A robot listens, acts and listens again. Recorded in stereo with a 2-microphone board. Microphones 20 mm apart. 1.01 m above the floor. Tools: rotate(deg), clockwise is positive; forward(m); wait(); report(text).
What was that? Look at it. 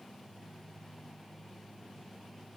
wait()
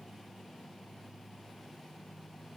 wait()
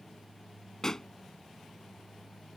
rotate(-30)
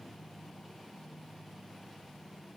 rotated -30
wait()
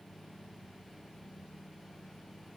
report("I heard a pop, but can't make it out now. It was about straight ahead or 120° left.")